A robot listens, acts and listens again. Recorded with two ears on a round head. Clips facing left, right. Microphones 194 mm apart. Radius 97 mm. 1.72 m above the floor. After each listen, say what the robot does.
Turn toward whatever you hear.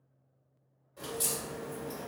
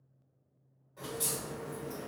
Turn 30° left.
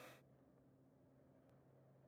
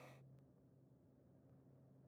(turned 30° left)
Keep listening.
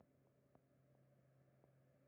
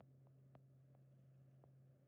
I heard a crack, but can't make it out now. It was about 15° right or 135° left.